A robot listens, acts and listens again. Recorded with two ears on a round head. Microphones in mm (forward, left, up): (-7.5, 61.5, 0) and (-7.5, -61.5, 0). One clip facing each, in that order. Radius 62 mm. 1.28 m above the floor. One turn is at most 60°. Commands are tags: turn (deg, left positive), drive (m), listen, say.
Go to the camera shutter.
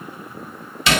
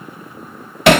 <listen/>
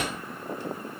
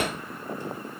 <listen/>
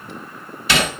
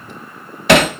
<say>I can't make out a camera shutter to turn to.</say>